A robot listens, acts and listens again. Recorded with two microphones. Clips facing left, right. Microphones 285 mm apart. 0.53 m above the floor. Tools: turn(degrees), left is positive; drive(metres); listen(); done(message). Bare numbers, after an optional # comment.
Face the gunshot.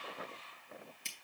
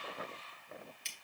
listen()
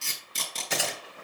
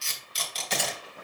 turn(30)
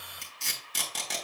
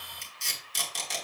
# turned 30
listen()
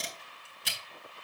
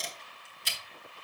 done("I heard a gunshot, but can't make it out now. It was about 25° right or 145° left.")